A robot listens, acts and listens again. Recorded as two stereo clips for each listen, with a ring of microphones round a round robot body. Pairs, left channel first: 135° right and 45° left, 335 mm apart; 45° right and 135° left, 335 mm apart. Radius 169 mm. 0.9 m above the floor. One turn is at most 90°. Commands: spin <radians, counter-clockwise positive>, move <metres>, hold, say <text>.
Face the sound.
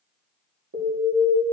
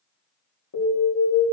spin -0.17
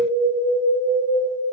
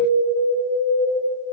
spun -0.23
say Facing the alarm.